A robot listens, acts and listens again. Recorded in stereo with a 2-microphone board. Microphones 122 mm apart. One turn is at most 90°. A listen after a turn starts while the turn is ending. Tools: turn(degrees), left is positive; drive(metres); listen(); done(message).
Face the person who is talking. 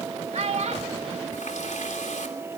turn(degrees=-65)
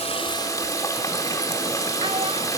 listen()
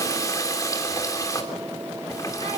listen()
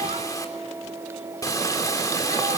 done("I heard a child speaking, but can't make it out now. It was about straight ahead or 50° right.")